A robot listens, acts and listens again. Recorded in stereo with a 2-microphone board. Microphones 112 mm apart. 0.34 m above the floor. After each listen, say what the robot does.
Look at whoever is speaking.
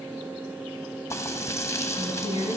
Turn 35° right.
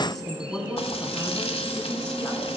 Turn 10° left.
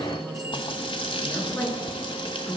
Facing the woman speaking, over 4 m away.